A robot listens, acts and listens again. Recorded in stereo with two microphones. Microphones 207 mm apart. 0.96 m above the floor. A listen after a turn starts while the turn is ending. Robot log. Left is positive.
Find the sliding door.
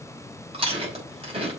cmd idle
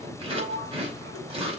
note: The sliding door: about 65° right or 115° right.
cmd yaw -65
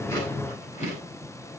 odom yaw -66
cmd idle
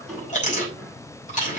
end: Found it: a sliding door, straight ahead, over 4 m away.